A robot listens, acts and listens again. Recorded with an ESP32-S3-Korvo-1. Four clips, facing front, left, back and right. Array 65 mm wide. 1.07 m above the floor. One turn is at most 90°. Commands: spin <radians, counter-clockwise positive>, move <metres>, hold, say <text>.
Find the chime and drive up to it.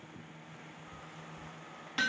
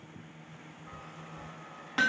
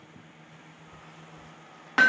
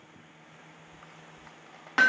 spin 1.57
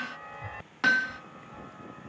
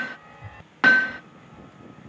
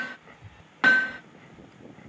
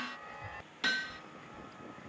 move 1.0
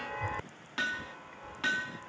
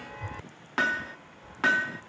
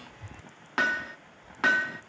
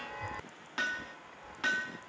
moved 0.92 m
move 1.0
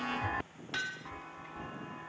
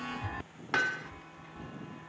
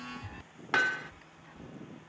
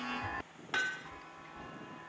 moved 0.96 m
move 1.0
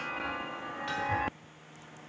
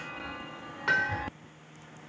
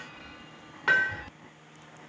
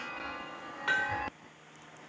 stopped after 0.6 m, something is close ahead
say I am next to the chime.